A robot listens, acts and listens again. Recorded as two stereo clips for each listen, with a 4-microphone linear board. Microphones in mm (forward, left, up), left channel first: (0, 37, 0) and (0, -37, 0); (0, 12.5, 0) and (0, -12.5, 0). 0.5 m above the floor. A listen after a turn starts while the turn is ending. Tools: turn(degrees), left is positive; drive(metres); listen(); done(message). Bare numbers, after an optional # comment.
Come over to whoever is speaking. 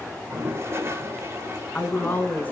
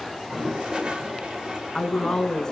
# The woman speaking: about 20° left or 160° left.
turn(20)
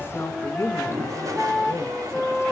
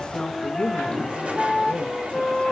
# So it is at 140° left.
turn(140)
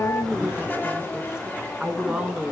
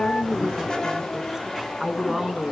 # The woman speaking is now 10° right.
turn(-10)
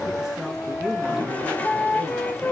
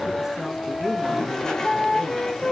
drive(1.0)
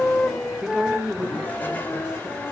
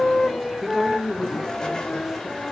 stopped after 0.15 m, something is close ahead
done("Something is in my way. I am facing the woman speaking but have not reached it.")